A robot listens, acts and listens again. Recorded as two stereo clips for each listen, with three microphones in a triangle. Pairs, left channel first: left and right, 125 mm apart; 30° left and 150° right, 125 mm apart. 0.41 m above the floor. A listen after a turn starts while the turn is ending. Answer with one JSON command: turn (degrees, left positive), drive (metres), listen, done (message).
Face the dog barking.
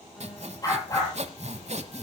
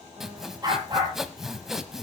{"turn": 150}
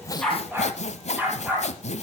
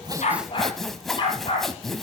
{"turn": -15}
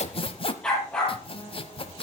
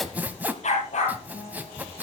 {"done": "Facing the dog barking, over 4 m away."}